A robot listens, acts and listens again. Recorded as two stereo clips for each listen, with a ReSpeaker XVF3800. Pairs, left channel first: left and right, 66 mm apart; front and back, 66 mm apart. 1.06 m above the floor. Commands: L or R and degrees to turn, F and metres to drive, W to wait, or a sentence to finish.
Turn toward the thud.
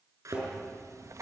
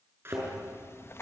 R125
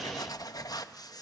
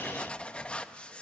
I heard a thud from this way, but can't make it out now.